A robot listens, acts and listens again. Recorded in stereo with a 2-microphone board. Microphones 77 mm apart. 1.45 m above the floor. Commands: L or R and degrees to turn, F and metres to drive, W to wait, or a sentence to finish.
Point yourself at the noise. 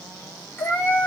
L25
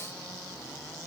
W
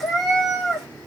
Facing the cat meowing.